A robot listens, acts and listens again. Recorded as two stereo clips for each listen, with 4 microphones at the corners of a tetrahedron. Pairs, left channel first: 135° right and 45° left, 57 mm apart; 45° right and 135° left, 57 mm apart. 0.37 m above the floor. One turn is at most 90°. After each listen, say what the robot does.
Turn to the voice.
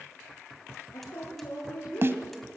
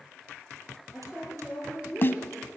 Turn 90° right.
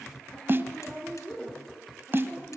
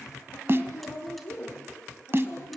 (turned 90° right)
Turn 65° right.
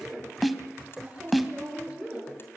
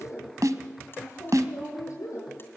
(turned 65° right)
Turn 25° right.
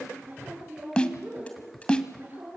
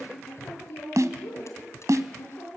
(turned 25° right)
Facing the woman speaking.